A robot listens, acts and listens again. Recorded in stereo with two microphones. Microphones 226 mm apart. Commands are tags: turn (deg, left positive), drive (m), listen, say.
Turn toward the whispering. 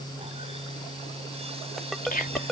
<turn deg="40"/>
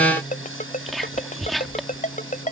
<say>Found it: whispering, straight ahead.</say>